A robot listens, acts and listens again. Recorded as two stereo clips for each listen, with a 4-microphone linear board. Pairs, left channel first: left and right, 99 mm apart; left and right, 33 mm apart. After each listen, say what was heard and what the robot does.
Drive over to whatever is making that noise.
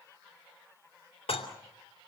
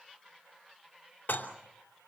The dishes clattering: about 75° left or 105° left. Turn 75° left.
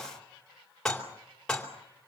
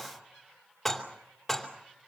Drive 1.0 m forward.
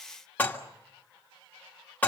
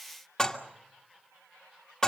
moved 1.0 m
The dishes clattering is now 20° left. Turn 20° left.
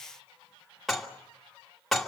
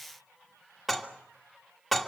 Drive 1.0 m forward.
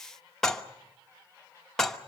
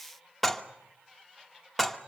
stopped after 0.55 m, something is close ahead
Arrived at the dishes clattering, straight ahead.